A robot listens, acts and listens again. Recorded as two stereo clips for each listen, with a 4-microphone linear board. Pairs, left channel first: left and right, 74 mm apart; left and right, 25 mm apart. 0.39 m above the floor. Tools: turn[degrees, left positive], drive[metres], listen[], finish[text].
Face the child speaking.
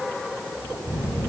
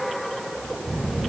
Thought: The child speaking: about 25° right or 155° right.
Action: turn[-25]
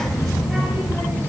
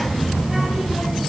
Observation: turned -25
Action: finish[Found it: a child speaking, straight ahead.]